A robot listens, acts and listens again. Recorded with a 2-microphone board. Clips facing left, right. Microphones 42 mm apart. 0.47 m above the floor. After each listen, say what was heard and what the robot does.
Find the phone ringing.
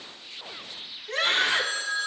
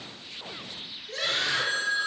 The phone ringing: about 15° right or 165° right. Turn 15° right.
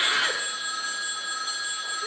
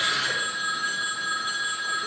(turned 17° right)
So it is at 150° right. Turn 150° right.
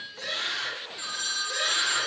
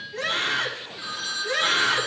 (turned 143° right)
Facing the phone ringing, 2 to 4 m away.